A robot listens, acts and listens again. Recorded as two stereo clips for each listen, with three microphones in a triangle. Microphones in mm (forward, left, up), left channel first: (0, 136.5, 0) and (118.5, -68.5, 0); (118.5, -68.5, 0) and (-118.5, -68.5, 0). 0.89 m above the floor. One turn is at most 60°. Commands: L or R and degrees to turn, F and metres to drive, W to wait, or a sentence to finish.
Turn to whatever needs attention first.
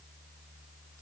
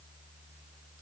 W
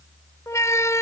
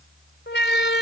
L40
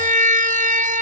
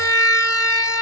Facing the siren.